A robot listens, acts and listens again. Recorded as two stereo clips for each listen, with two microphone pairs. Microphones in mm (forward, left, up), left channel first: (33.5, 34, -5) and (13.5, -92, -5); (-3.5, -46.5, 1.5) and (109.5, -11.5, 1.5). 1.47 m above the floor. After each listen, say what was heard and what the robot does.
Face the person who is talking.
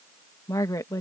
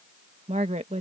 The woman speaking: 20° left. Turn 20° left.
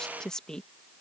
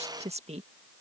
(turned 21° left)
Found it: a woman speaking, straight ahead.